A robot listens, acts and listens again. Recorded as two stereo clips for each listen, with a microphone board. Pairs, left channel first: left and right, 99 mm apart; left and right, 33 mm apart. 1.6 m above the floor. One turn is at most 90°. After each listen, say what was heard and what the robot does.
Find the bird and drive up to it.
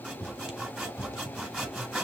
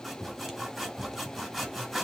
Keep listening.
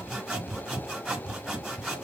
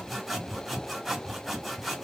Keep listening.
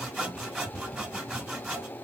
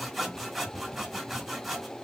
I can't make out a bird to turn to.